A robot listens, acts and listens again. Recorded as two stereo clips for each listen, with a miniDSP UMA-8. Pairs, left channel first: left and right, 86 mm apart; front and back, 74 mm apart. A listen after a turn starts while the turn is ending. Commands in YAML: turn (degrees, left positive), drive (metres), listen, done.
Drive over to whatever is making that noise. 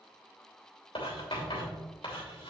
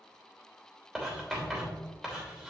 turn: 100
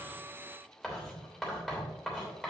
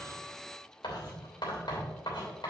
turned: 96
drive: 1.0
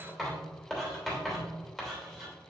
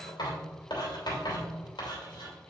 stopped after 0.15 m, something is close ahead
done: "Blocked. The writing is further on, straight ahead."